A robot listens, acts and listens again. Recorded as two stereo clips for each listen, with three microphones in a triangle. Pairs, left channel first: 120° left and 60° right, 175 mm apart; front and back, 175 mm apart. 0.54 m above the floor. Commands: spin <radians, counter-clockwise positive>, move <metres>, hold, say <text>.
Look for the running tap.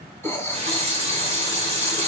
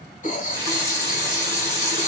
spin -1.92
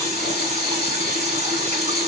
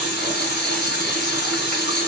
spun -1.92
spin -0.17
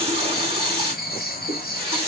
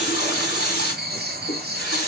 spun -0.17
say Found it: a running tap, straight ahead.